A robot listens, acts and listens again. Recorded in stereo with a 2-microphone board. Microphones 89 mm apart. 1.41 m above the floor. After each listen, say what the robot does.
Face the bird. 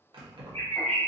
Turn 20° left.
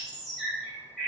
Facing the bird.